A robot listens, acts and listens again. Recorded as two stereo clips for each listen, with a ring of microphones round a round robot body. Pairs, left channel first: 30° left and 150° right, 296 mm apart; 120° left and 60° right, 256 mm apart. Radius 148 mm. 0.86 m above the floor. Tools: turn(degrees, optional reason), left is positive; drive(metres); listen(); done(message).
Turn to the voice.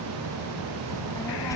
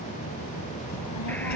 turn(degrees=110, reason="The child speaking: 110° left.")
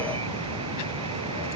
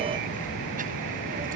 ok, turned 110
done("Facing the child speaking.")